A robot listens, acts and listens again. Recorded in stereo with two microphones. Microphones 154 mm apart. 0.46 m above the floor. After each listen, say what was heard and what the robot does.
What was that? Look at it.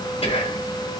The whispering: about 40° left or 140° left. Turn 40° left.
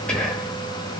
Found it: whispering, straight ahead, 1 to 2 m away.